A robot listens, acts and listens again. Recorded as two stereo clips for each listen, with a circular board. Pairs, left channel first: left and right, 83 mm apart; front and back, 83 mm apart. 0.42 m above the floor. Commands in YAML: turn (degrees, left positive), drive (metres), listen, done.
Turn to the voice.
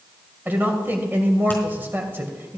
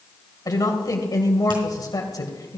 turn: -30
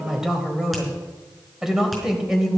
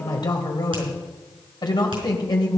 done: "Facing the woman speaking."